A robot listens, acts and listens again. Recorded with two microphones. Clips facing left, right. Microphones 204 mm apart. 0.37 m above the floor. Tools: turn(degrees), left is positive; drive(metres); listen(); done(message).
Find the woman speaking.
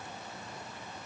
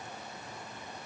listen()
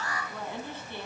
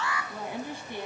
turn(degrees=-15)
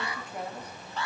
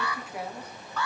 turn(degrees=-30)
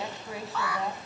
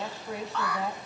turn(degrees=-30)
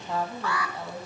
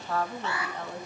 done("Facing the woman speaking.")